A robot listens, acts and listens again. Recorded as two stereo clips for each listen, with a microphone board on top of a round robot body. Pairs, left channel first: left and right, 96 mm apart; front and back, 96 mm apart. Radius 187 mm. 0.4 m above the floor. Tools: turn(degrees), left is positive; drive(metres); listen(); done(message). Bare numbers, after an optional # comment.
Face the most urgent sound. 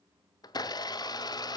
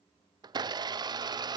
listen()
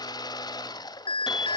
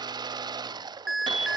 # The alarm: 90° left.
turn(90)
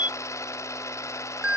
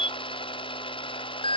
# The alarm is now 15° right.
turn(-15)
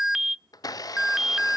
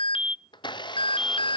done("Facing the alarm, under 1 m away.")